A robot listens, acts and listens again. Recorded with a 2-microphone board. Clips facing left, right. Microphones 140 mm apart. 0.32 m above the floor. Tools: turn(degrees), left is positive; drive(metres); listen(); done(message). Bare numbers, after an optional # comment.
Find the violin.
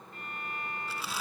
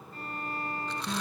# The violin: about 35° right or 145° right.
turn(-35)
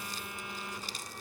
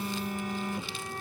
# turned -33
listen()
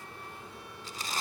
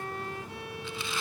# So it is at 115° right.
turn(-115)
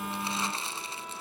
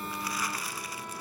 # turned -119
listen()
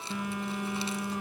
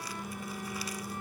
listen()
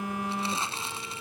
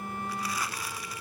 done("I heard a violin from this way, but can't make it out now.")